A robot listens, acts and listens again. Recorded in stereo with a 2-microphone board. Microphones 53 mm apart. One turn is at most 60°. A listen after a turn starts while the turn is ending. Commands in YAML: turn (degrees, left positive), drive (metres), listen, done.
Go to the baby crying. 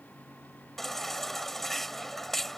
turn: 30
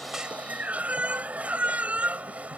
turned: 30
turn: -25
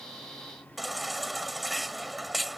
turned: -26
drive: 1.0
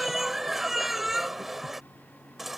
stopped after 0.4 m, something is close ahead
done: "Blocked. The baby crying is further on, straight ahead."